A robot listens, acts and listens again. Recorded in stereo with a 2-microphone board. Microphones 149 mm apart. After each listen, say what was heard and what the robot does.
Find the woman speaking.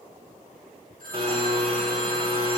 Keep listening.
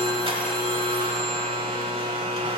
Keep listening.
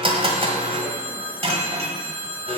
I can't make out a woman speaking to turn to.